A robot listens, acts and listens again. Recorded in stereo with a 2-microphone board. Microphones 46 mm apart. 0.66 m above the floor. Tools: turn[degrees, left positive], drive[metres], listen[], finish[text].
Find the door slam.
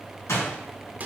Action: turn[90]
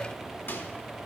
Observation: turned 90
Action: finish[Facing where the door slam came from. I can't hear it now.]